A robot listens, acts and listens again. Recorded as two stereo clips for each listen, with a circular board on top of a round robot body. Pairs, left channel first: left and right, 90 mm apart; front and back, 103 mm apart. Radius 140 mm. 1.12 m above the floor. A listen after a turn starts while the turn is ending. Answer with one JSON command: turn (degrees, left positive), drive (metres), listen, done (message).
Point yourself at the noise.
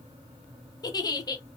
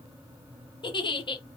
{"turn": 45}
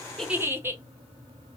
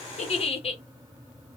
{"turn": -25}
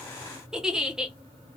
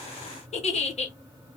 {"done": "Facing the giggle."}